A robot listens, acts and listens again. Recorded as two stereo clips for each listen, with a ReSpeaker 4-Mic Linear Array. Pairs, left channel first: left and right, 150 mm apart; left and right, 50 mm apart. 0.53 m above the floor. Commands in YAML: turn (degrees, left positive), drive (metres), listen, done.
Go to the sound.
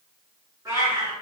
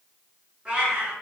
turn: -20
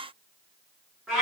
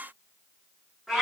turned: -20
drive: 1.0
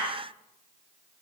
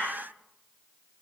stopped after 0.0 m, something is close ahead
done: "Something is in my way. I am facing the cat meowing but have not reached it."